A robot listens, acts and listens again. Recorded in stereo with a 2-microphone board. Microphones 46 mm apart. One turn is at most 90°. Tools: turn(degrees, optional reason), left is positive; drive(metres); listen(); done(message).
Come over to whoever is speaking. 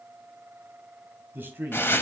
turn(degrees=-45, reason="The man speaking: about 45° right or 135° right.")
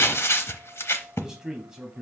turn(degrees=-10, reason="So it is at 10° right.")
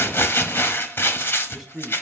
drive(metres=1.0)
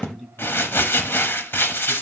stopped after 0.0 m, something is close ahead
done("Blocked. The man speaking is further on, straight ahead.")